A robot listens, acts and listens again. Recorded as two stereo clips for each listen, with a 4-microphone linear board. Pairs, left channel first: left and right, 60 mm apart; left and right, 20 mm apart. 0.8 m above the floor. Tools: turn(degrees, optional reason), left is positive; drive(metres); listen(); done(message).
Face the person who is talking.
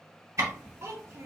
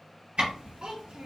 turn(degrees=-50, reason="The child speaking: about 50° right or 130° right.")
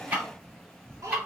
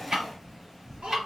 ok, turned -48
turn(degrees=-75, reason="So it is at 75° right.")
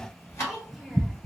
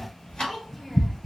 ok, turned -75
done("Facing the child speaking, 1 to 2 m away.")